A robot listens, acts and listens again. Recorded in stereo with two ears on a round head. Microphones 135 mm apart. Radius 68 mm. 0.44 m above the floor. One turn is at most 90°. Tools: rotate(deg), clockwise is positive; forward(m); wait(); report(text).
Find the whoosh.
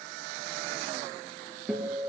wait()
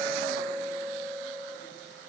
wait()
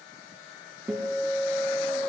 report("I can't make out a whoosh to turn to.")